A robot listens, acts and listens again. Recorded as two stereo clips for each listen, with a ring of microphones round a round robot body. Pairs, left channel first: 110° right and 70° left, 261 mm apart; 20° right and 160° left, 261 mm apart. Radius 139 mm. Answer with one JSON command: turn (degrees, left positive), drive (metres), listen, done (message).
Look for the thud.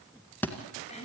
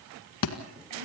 {"turn": -30}
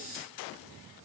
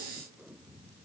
{"done": "I heard a thud from this way, but can't make it out now."}